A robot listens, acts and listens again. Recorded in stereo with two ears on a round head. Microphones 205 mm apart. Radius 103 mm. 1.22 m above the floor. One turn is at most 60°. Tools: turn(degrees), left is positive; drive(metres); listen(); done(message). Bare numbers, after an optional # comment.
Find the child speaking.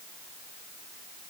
listen()
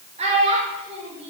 # The child speaking: about 30° right or 150° right.
turn(-30)
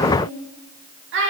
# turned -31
# So it is at 125° right.
turn(-60)
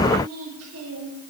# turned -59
# The child speaking is now 70° right.
turn(-60)
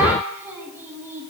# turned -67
# The child speaking is now 10° right.
turn(-10)
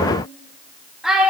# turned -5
done("Found it: a child speaking, straight ahead, 1 to 2 m away.")